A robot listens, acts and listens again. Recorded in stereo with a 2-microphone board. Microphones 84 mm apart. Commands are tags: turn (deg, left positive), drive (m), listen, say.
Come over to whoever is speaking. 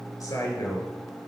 <turn deg="50"/>
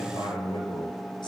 <turn deg="75"/>
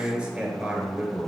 <turn deg="-15"/>
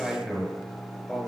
<drive m="1.0"/>
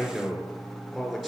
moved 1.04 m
<drive m="1.0"/>
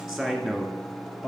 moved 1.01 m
<turn deg="-10"/>
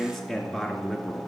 <drive m="1.0"/>
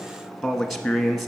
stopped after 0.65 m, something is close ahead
<say>I am next to the man speaking.</say>